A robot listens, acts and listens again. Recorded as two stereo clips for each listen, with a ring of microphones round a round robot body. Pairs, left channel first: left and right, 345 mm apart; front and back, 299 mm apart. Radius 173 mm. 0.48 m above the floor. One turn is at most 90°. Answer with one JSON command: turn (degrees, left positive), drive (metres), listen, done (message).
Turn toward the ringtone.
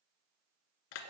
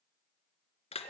{"listen": true}
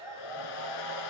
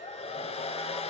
{"listen": true}
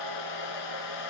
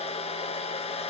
{"done": "I can't make out a ringtone, only a hair dryer."}